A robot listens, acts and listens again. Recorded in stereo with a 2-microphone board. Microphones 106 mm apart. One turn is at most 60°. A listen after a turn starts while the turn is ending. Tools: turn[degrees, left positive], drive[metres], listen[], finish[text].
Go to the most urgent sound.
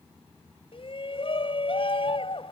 Thought: The shout: about 65° left or 115° left.
Action: turn[60]
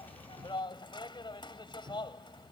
Thought: So it is at 50° left.
Action: turn[50]
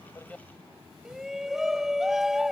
Action: drive[1.0]
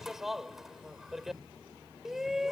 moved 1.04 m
Action: drive[1.0]
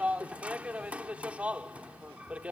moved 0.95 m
Thought: The shout is now 20° right.
Action: turn[-20]
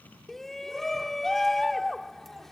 Action: drive[1.0]
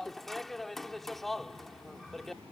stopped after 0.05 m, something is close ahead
Action: finish[I am next to the shout.]